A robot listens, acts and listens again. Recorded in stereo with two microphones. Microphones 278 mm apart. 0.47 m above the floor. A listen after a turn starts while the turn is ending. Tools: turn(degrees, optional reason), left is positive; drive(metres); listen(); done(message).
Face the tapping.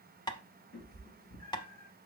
turn(degrees=15, reason="The tapping: about 15° left or 165° left.")
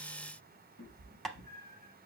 done("Found it: tapping, straight ahead.")